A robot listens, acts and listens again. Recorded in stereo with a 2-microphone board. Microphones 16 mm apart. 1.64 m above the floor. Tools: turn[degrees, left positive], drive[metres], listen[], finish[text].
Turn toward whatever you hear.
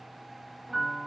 Action: turn[30]
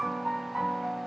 Thought: So it is at 25° right.
Action: turn[-25]
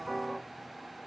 Action: finish[Found it: a piano, straight ahead, 2 to 4 m away.]